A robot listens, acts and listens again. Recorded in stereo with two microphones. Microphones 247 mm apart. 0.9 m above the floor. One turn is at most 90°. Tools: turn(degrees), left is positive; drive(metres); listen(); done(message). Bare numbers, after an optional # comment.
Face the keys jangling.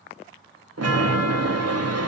listen()
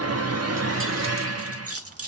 # The keys jangling: about 75° right or 105° right.
turn(-75)
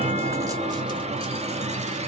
listen()
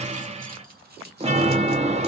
# So it is at 40° right.
turn(-40)
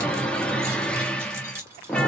# The keys jangling is now 10° right.
turn(-10)
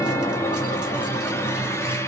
listen()
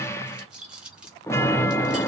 done("Found it: keys jangling, straight ahead.")